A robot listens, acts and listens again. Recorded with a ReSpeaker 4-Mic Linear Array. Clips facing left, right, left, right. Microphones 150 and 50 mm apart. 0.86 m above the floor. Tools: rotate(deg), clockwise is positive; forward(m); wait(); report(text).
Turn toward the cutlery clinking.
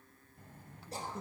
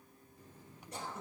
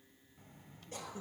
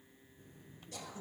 wait()
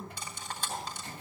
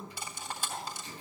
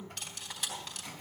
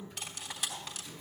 rotate(30)
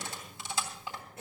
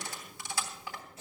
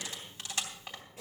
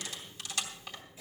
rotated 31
rotate(-25)
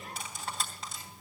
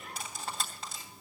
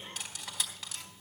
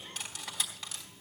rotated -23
report("Found it: cutlery clinking, straight ahead.")